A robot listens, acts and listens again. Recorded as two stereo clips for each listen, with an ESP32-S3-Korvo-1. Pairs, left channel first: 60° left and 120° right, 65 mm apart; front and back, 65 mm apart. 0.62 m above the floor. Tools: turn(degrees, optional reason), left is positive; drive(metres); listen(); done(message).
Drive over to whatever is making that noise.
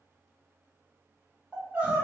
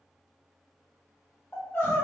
turn(degrees=-45, reason="The crying: 45° right.")
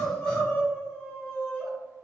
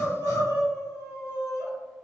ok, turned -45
drive(metres=1.0)
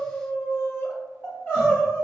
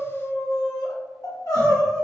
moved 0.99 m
drive(metres=1.0)
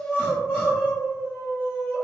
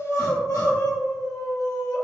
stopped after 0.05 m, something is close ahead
done("I am next to the crying.")